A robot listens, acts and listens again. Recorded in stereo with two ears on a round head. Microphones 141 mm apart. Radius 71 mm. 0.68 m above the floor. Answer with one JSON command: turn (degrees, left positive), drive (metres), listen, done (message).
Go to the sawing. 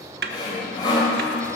{"turn": 30}
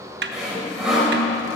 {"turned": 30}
{"drive": 1.0}
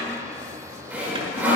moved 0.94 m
{"turn": -10}
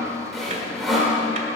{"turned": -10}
{"drive": 1.0}
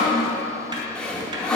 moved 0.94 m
{"turn": 10}
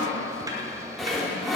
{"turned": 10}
{"drive": 1.0}
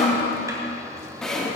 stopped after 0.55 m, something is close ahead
{"done": "Arrived at the sawing, straight ahead."}